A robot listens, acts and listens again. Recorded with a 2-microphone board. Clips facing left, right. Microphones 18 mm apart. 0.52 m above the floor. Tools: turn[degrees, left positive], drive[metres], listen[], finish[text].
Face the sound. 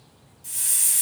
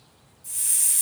Thought: The hiss: about 65° left or 115° left.
Action: turn[65]
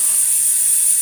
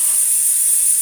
Thought: So it is at 10° left.
Action: turn[10]
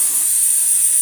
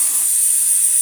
Action: finish[Found it: a hiss, straight ahead, 1 to 2 m away.]